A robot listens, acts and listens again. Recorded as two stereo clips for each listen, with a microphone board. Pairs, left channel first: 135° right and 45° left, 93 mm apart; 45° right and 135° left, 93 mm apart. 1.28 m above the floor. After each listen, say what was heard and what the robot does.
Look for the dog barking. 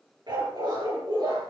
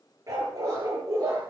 The dog barking: 85° left. Turn 85° left.
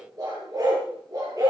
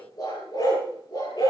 The dog barking is now 10° right. Turn 10° right.
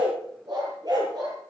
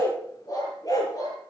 Found it: a dog barking, straight ahead.